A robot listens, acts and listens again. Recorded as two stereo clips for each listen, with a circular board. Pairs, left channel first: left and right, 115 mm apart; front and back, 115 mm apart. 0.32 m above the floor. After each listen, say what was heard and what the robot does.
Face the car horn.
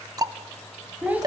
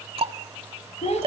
Keep listening.
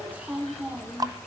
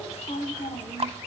Keep listening.
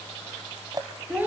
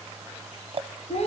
I can't make out a car horn, only a child speaking and ticking.